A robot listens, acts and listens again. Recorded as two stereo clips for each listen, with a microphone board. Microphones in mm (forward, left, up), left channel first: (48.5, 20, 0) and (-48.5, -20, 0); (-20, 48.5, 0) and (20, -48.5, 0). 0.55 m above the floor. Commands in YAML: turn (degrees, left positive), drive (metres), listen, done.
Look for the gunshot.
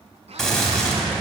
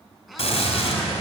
turn: 110
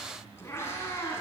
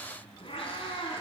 done: "Facing where the gunshot came from. I can't hear it now."